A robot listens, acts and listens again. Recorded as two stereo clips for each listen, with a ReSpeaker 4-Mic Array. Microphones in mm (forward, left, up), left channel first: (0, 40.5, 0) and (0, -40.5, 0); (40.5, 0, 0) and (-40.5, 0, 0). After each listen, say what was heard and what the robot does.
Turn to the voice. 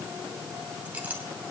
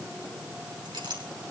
Keep listening.
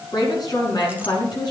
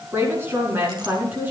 The woman speaking: 115° left. Turn 115° left.
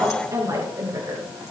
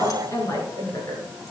The woman speaking is now 45° right. Turn 45° right.
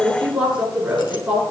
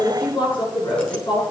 The woman speaking is now 15° right. Turn 15° right.
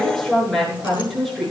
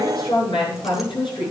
Facing the woman speaking.